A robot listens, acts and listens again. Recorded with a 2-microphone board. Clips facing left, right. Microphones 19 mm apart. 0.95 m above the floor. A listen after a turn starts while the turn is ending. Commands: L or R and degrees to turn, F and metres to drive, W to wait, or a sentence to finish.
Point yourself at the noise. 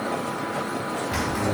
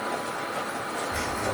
L90
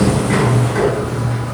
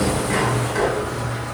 Found it: a sliding door, straight ahead, over 4 m away.